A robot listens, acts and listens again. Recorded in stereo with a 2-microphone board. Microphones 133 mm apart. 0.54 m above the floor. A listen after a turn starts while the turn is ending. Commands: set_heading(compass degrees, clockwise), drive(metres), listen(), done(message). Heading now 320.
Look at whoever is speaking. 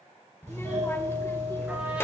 set_heading(305)
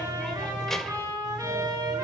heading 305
listen()
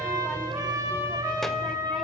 listen()
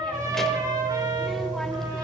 done("I heard a child speaking, but can't make it out now. It was about straight ahead or 150° left.")